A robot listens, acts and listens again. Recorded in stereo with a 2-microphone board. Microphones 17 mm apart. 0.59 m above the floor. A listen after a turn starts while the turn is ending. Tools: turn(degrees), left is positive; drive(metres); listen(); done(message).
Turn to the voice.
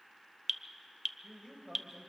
turn(degrees=-45)
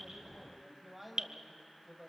done("Facing the man speaking, over 4 m away.")